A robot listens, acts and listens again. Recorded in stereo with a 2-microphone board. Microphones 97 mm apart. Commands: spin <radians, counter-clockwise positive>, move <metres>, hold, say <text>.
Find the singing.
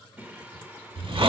spin -0.35
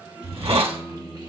spin -2.27
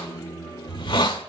spin 0.70
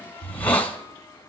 hold
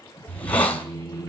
spin 0.52
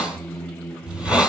say Found it: singing, straight ahead, 1 to 2 m away.